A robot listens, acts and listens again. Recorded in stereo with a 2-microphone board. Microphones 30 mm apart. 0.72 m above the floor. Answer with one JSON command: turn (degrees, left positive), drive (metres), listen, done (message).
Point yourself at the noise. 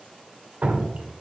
{"turn": -50}
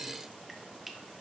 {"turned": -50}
{"listen": true}
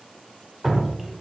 {"done": "Found it: dripping, straight ahead, under 1 m away."}